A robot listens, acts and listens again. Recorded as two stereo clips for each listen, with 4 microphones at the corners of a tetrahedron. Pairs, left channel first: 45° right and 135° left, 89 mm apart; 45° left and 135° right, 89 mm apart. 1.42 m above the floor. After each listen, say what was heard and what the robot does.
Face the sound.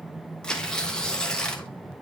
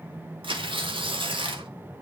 The tearing paper: 125° right. Turn 125° right.
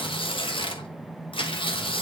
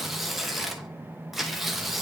The tearing paper is now 45° right. Turn 45° right.
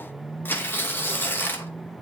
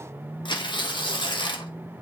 The tearing paper is now 20° left. Turn 20° left.
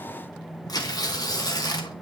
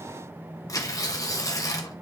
Found it: tearing paper, straight ahead.